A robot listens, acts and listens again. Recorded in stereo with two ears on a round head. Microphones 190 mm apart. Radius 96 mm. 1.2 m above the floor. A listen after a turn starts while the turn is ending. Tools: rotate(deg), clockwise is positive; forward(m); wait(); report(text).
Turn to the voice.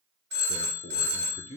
rotate(-35)
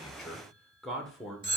report("Facing the man speaking, under 1 m away.")